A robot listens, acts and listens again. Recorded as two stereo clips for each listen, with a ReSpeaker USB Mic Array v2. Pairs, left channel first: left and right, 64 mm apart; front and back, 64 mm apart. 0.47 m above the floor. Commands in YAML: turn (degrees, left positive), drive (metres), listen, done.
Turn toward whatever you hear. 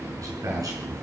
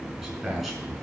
turn: -95
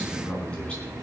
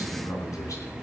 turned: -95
turn: 20
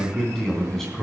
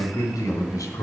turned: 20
done: "Found it: a man speaking, straight ahead."